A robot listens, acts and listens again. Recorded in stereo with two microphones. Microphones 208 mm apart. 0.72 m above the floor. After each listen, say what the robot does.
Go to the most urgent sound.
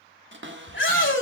Turn 65° left.
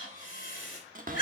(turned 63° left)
Turn 45° left.
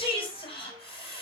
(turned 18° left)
Turn 25° left.
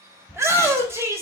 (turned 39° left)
Turn 15° right.
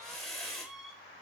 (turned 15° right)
Drive 1.0 m forward.
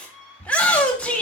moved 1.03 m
Drive 1.0 m forward.
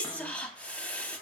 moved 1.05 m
Drive 1.0 m forward.
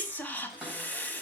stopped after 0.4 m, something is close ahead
Turn 10° left.
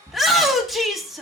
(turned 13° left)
Arrived at the shout, straight ahead.